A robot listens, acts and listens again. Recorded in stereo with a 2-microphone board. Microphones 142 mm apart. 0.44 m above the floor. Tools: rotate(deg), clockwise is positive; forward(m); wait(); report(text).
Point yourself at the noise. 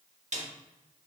rotate(55)
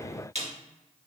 rotate(60)
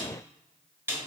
rotate(20)
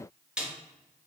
report("Found it: a snare drum, straight ahead.")